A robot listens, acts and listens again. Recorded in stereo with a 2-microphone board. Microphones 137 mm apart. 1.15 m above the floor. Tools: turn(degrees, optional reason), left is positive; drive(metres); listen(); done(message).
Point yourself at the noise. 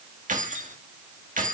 turn(degrees=-75, reason="The keys jangling: about 75° right or 105° right.")
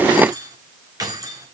turn(degrees=-25, reason="So it is at 25° right.")
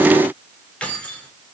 turn(degrees=10, reason="The keys jangling is now 10° left.")
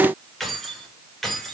done("Found it: keys jangling, straight ahead, 2 to 4 m away.")